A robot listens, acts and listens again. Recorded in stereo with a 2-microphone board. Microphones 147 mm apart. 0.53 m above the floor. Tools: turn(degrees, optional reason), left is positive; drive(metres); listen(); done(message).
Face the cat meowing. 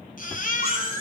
turn(degrees=40, reason="The cat meowing: about 40° left or 140° left.")
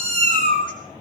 turn(degrees=105, reason="So it is at 105° left.")
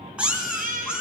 done("Found it: a cat meowing, straight ahead, 2 to 4 m away.")